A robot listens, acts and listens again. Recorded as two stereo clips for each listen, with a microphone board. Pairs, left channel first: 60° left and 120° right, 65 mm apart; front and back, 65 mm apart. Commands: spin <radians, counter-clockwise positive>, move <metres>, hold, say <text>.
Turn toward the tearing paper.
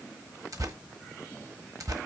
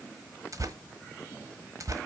spin -2.53
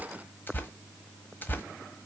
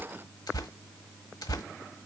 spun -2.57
say Found it: tearing paper, straight ahead, 1 to 2 m away.